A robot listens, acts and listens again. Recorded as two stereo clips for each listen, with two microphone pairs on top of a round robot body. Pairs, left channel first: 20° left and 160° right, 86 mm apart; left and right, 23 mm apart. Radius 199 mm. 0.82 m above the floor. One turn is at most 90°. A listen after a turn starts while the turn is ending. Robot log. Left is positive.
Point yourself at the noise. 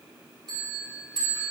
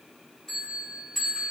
note: The bell: 160° left.
cmd yaw +90
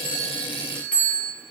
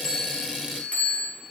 note: The bell is now 90° left.
cmd yaw +90
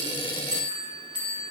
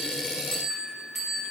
end: Facing the bell.